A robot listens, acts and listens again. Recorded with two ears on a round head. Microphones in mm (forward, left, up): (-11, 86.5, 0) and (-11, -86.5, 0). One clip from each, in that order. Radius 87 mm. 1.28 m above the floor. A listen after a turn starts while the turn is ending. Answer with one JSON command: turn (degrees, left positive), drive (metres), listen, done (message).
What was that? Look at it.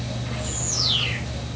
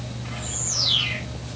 {"turn": -25}
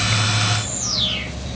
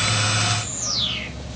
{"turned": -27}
{"done": "Found it: a bird, straight ahead, over 4 m away."}